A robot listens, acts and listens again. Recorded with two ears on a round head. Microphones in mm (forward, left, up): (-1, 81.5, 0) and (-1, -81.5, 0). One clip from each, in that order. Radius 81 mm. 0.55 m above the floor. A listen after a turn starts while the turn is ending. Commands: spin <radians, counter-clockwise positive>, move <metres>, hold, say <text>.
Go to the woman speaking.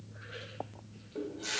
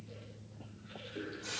hold
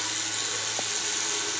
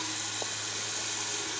hold
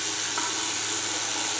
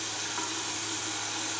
say I can't make out a woman speaking, only a running tap.